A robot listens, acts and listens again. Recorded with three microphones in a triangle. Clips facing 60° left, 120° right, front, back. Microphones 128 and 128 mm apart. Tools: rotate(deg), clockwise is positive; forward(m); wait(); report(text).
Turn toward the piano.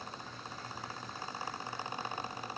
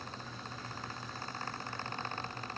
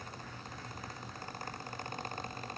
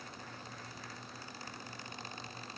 wait()
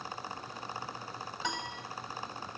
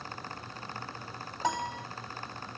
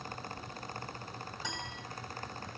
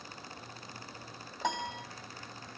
rotate(160)
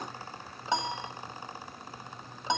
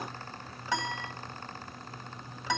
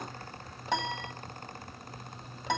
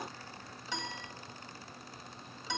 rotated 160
report("Found it: a piano, straight ahead, 1 to 2 m away.")